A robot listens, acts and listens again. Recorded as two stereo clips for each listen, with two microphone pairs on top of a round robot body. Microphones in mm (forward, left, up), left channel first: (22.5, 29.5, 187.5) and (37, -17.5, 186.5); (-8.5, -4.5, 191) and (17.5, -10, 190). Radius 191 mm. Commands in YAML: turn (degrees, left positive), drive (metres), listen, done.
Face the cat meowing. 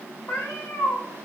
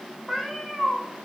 turn: 90
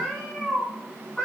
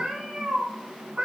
turn: 25
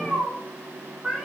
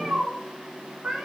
done: "Found it: a cat meowing, straight ahead."